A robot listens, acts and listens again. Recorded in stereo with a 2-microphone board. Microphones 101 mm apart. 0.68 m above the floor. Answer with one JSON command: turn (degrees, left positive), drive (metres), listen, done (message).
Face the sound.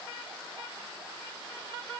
{"listen": true}
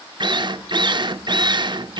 {"turn": -50}
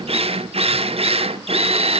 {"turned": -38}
{"turn": -90}
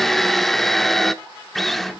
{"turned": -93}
{"done": "Facing the drill, under 1 m away."}